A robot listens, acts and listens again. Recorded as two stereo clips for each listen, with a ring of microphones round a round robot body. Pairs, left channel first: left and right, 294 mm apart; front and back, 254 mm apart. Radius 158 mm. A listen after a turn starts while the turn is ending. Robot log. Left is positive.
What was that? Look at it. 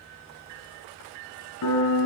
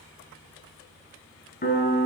note: The piano: 55° left.
cmd yaw +55
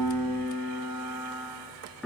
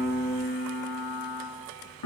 end: Facing the piano.